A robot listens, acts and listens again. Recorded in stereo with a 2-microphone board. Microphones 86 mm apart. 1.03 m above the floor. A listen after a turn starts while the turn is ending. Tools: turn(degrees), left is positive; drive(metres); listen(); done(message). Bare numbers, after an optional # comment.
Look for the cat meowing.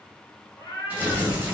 # The cat meowing: about 30° left or 150° left.
turn(30)
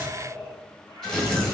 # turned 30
# So it is at 125° left.
turn(125)
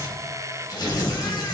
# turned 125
listen()
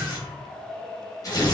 done("Found it: a cat meowing, straight ahead, 2 to 4 m away.")